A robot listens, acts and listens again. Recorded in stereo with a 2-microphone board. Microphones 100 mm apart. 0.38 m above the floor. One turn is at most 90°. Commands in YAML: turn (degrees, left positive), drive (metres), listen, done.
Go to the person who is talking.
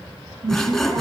turn: -60
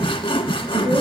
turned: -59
turn: -60
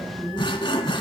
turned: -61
drive: 1.0
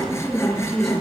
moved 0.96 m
drive: 1.0
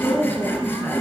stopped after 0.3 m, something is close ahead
turn: 10
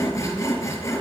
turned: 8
listen: true
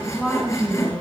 done: "Blocked. The woman speaking is further on, straight ahead."